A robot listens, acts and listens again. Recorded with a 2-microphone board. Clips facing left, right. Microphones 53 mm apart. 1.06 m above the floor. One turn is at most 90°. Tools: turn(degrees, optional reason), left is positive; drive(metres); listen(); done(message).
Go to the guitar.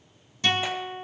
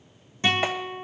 turn(degrees=-25, reason="The guitar: about 25° right or 155° right.")
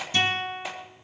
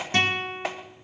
turn(degrees=-90, reason="So it is at 130° right.")
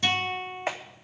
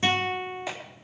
turn(degrees=-30, reason="The guitar is now 30° right.")
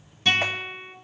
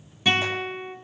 turn(degrees=-10, reason="The guitar is now 10° right.")
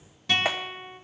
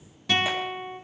drive(metres=1.0)
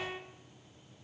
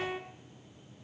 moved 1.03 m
turn(degrees=-10, reason="The guitar is now 10° right.")
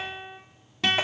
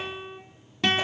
drive(metres=1.0)
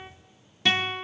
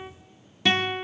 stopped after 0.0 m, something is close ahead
done("Arrived at the guitar, straight ahead.")